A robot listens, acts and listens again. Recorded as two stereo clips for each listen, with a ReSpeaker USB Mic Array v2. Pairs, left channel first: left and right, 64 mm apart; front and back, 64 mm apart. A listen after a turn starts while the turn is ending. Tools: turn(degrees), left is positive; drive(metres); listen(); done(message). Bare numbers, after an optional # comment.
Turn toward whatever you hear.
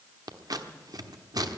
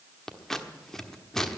# The scissors: 85° right.
turn(-85)
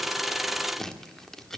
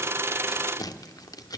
done("Facing the scissors.")